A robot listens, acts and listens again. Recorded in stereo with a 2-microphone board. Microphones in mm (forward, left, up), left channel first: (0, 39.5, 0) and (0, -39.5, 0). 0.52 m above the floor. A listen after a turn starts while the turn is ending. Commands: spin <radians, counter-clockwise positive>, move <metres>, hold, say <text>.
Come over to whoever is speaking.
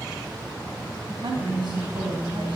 spin -1.13
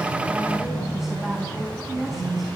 move 1.0
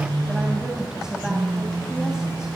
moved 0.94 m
move 1.0
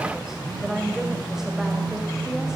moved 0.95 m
move 1.0
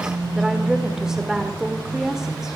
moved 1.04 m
move 1.0
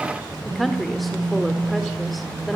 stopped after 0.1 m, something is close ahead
say Arrived at the woman speaking, straight ahead.